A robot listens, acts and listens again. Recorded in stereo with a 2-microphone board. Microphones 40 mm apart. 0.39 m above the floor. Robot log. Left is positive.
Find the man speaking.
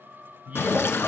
note: The man speaking: about 40° right or 140° right.
cmd yaw -40
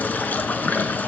cmd idle
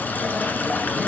cmd idle
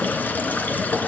end: I heard a man speaking, but can't make it out now. It was about straight ahead or 100° right.